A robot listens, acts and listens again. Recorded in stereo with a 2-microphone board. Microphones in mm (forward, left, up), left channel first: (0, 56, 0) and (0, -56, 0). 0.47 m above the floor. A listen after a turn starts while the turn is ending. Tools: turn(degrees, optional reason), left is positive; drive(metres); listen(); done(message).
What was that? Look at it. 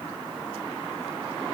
listen()
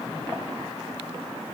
listen()
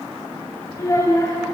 turn(degrees=30, reason="The child speaking: about 30° left or 150° left.")
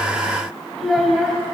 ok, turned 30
done("Found it: a child speaking, straight ahead.")